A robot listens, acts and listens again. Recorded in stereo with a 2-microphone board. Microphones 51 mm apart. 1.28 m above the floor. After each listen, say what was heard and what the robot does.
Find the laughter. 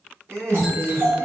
The laughter: about 75° right or 105° right. Turn 75° right.
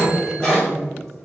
So it is at 10° left. Turn 10° left.
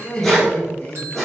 The laughter is now 30° left. Turn 30° left.
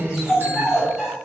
The laughter is now 25° left. Turn 25° left.
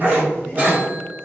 The laughter is now 15° left. Turn 15° left.
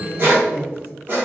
Found it: laughter, straight ahead, 1 to 2 m away.